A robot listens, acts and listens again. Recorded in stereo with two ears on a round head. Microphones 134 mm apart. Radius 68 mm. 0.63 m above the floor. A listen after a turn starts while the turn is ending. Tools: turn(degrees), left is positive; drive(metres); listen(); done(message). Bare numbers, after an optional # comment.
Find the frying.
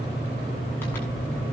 listen()
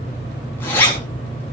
listen()
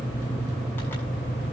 done("I can't make out frying to turn to.")